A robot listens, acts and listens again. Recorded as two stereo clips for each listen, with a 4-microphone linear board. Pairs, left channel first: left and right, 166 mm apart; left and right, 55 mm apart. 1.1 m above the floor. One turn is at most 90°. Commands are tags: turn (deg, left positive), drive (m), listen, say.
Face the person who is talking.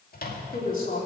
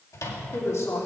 <turn deg="60"/>
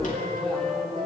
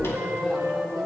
<listen/>
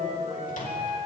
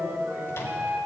<listen/>
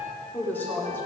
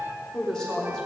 <turn deg="15"/>
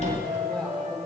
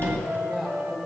<say>Facing the woman speaking.</say>